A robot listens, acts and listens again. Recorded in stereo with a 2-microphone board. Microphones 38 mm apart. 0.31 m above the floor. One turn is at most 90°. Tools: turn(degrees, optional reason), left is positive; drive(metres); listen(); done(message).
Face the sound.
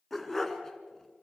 turn(degrees=30)
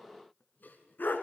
turn(degrees=90, reason="So it is at 120° left.")
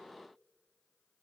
turn(degrees=30, reason="Nothing new. It was at 30° left.")
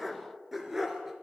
turn(degrees=-10, reason="The dog barking is now 10° right.")
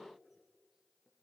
listen()
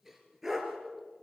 turn(degrees=-10, reason="The dog barking is now 10° right.")
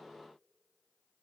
listen()
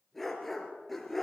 done("Facing the dog barking, 2 to 4 m away.")